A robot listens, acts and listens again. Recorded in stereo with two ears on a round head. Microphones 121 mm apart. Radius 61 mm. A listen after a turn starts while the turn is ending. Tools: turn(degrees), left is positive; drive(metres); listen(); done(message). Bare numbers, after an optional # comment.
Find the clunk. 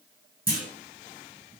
turn(-30)
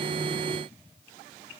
listen()
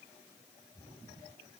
done("I heard a clunk, but can't make it out now. It was about 15° left or 135° right.")